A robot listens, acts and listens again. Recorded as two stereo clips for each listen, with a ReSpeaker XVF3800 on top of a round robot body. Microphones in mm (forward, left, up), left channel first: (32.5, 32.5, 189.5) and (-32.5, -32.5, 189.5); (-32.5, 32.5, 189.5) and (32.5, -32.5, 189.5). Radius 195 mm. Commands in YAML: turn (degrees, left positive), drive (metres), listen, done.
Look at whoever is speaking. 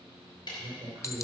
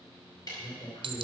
turn: 175
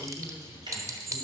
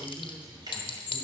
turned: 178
done: "Facing the woman speaking, 2 to 4 m away."